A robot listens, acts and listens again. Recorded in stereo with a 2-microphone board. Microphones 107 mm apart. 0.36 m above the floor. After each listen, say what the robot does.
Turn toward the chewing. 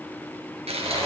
Turn 90° right.
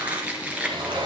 Turn 15° right.
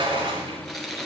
Found it: chewing, straight ahead.